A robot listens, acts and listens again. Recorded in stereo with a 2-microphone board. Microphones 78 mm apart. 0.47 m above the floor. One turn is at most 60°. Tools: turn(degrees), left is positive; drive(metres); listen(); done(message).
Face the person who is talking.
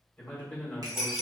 turn(degrees=20)
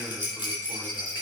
listen()
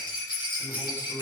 turn(degrees=60)
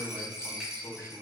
turn(degrees=60)
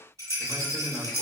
turn(degrees=35)
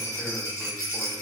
listen()
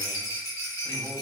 turn(degrees=20)
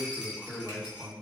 done("Found it: a man speaking, straight ahead, 2 to 4 m away.")